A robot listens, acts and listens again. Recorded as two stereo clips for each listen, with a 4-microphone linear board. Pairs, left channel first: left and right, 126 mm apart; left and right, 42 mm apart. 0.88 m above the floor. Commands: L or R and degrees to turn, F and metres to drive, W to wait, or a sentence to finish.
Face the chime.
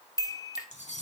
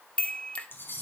L30
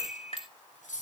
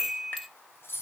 Found it: a chime, straight ahead.